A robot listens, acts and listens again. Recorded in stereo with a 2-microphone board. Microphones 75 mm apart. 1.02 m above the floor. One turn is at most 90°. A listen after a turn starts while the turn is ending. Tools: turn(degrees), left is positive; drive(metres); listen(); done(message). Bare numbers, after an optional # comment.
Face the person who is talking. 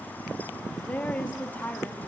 # The woman speaking: about 25° left or 155° left.
turn(25)
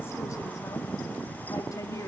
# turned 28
# So it is at 130° left.
turn(90)
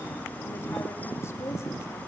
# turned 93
# Nothing new. It was at 35° left.
turn(35)
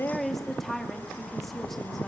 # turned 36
done("Facing the woman speaking.")